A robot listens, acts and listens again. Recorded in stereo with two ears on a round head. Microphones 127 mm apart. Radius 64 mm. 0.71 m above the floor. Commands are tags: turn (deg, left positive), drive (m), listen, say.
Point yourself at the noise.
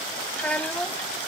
<turn deg="30"/>
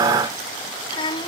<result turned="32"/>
<turn deg="145"/>
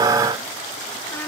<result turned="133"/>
<turn deg="15"/>
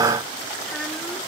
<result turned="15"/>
<listen/>
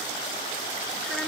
<say>I heard a child speaking from this way, but can't make it out now.</say>